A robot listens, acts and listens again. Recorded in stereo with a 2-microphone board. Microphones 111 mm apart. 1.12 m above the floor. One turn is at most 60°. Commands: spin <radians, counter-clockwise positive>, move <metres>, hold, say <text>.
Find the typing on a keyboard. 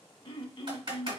spin -0.96
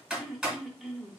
say Found it: typing on a keyboard, straight ahead, 2 to 4 m away.